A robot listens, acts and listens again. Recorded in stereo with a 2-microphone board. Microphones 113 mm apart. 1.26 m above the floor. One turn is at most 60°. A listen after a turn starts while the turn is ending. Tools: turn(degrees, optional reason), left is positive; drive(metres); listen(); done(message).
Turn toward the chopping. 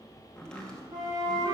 turn(degrees=30)
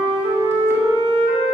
listen()
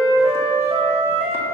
listen()
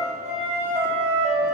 done("I heard chopping, but can't make it out now. It was about 25° right or 145° left.")